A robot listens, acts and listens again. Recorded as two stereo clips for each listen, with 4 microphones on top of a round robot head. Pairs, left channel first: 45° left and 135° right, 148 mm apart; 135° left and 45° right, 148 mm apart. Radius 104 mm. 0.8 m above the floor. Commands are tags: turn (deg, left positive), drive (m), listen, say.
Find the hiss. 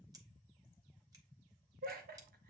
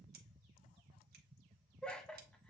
<listen/>
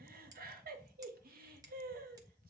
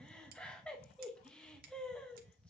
<listen/>
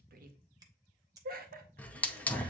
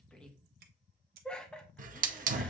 <turn deg="-35"/>
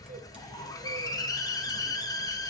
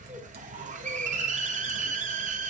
<turn deg="-20"/>
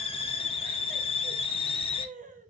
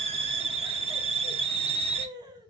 <say>Facing the hiss.</say>